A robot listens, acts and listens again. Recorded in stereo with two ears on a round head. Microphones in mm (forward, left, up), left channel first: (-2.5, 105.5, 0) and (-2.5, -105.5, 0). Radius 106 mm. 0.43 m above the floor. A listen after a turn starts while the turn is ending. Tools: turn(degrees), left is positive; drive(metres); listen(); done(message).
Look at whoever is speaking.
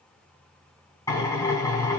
listen()
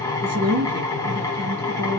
turn(degrees=-40)
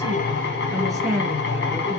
done("Facing the woman speaking, over 4 m away.")